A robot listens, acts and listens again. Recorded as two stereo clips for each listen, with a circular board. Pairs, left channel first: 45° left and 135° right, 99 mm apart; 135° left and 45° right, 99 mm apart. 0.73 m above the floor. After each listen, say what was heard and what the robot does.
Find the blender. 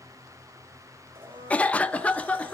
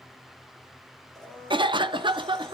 The blender: 140° right. Turn 140° right.
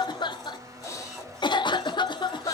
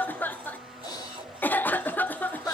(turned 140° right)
The blender is now 45° right. Turn 45° right.
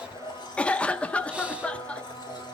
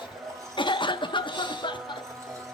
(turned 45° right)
The blender is now 10° left. Turn 10° left.
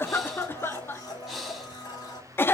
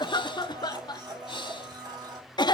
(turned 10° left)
Facing the blender.